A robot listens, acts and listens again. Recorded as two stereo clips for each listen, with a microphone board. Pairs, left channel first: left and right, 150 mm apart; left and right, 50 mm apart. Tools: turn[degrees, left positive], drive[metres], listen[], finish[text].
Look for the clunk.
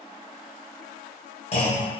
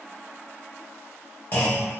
Thought: The clunk: about 40° left or 140° left.
Action: turn[40]
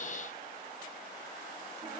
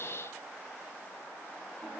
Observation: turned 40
Action: listen[]
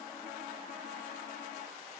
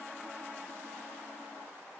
Action: finish[I heard a clunk, but can't make it out now. It was about straight ahead or 100° left.]